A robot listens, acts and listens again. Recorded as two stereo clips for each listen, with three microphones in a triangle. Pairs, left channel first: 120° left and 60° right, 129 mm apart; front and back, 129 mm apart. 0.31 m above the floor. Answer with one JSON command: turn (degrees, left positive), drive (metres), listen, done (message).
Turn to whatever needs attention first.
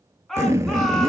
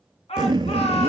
{"turn": 35}
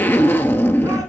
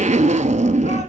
{"listen": true}
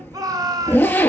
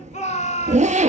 {"done": "Facing the shout."}